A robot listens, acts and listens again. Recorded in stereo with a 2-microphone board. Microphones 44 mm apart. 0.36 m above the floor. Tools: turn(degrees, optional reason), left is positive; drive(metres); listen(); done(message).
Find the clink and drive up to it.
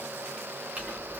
turn(degrees=-35, reason="The clink: about 35° right or 145° right.")
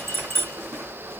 turn(degrees=-110, reason="So it is at 110° right.")
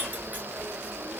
turn(degrees=-35, reason="The clink is now 35° right.")
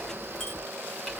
drive(metres=1.0)
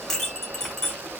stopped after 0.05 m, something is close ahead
done("Something is in my way. I am facing the clink but have not reached it.")